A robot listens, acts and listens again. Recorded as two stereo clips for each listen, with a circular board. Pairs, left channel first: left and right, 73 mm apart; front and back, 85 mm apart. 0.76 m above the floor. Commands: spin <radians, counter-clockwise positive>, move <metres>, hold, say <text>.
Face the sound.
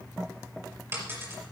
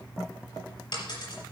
spin -0.52
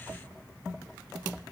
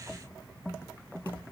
say I heard a dropped coin from this way, but can't make it out now.